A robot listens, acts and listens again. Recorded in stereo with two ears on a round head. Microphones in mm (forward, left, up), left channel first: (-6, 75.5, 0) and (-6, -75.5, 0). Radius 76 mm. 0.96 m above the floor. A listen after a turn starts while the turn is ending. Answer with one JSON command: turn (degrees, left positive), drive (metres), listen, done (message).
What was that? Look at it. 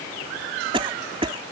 {"turn": -30}
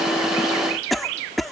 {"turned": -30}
{"done": "Found it: a cough, straight ahead."}